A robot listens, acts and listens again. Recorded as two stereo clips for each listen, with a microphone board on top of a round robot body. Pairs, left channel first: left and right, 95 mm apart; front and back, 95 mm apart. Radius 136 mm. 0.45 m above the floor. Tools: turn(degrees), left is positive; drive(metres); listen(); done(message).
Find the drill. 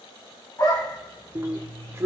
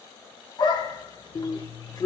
turn(degrees=-35)
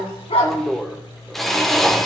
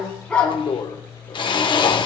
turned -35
done("Facing the drill, 1 to 2 m away.")